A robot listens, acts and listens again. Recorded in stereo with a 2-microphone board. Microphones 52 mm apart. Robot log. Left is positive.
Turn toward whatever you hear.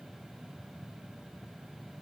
cmd idle
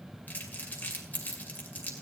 note: The crumpling: about 35° left or 145° left.
cmd yaw +35
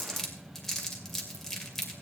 note: So it is at 10° left.
cmd yaw +10
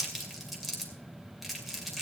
end: Found it: crumpling, straight ahead, 2 to 4 m away.